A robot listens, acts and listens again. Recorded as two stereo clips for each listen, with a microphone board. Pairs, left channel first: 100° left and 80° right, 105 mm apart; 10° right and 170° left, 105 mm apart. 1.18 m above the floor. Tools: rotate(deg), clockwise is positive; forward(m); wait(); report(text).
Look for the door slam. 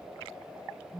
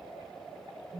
wait()
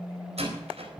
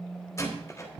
rotate(75)
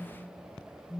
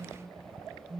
report("I heard a door slam from this way, but can't make it out now.")